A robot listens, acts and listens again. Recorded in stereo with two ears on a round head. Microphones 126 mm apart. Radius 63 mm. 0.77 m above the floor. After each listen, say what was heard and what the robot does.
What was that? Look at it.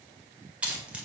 Turn 30° right.
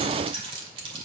So it is at 140° right. Turn 140° right.
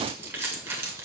The keys jangling is now 15° right. Turn 15° right.
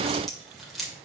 Facing the keys jangling, 1 to 2 m away.